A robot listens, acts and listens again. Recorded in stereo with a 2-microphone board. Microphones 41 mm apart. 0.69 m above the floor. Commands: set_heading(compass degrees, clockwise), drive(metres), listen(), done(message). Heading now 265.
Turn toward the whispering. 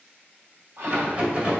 set_heading(330)
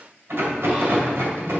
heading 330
listen()
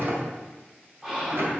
set_heading(345)
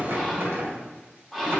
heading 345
done("Found it: whispering, straight ahead, 2 to 4 m away.")